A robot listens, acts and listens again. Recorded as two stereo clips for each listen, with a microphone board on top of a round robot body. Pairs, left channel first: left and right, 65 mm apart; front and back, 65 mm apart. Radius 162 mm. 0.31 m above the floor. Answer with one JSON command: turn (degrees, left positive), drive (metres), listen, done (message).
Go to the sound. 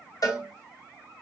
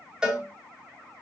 {"turn": 105}
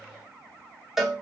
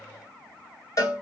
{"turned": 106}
{"drive": 1.0}
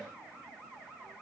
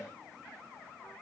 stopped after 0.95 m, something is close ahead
{"listen": true}
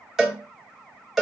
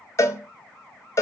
{"done": "Arrived at the cowbell, straight ahead."}